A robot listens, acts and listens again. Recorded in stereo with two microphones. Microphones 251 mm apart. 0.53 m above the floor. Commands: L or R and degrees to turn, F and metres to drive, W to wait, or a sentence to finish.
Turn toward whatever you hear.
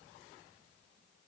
W
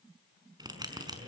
R15
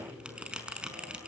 Facing the bell, over 4 m away.